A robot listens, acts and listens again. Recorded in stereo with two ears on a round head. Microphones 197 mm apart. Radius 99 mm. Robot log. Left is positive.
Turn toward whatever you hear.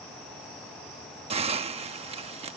note: The hiss: about 25° right or 155° right.
cmd yaw -25
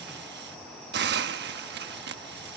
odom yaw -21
note: So it is at 130° right.
cmd yaw -130
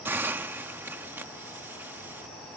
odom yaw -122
note: The hiss is now 10° right.
cmd yaw -10
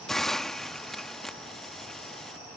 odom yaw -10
end: Found it: a hiss, straight ahead.